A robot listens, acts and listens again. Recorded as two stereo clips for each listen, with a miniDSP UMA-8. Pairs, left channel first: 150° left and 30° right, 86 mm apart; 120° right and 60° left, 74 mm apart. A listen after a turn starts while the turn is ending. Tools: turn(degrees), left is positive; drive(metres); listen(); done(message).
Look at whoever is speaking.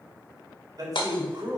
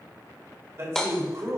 turn(degrees=10)
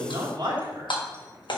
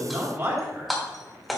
done("Found it: a man speaking, straight ahead, 2 to 4 m away.")